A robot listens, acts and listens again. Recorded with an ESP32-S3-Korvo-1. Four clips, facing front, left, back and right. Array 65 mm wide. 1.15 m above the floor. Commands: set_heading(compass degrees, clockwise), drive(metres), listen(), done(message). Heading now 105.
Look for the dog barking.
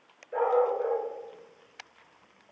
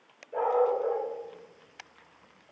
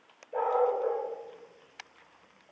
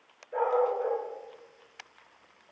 set_heading(135)
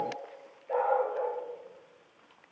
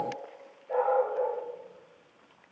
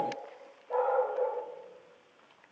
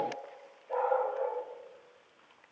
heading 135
set_heading(125)
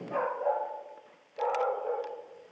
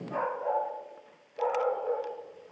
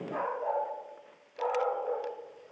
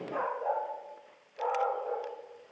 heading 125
set_heading(115)
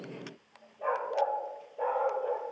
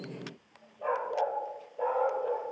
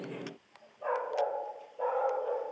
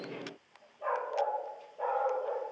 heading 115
done("Found it: a dog barking, straight ahead.")